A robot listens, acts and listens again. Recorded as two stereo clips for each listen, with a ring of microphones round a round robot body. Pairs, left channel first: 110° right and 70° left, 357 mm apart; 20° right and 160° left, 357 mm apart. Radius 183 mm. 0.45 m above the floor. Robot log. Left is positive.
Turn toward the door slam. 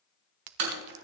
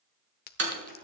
note: The door slam: 100° left.
cmd yaw +100
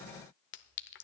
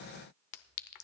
end: Facing where the door slam came from. I can't hear it now.